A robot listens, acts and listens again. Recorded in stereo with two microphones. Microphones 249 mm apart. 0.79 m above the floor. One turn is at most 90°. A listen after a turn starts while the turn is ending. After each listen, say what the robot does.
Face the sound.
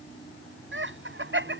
Turn 50° right.
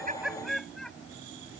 Found it: laughter, straight ahead.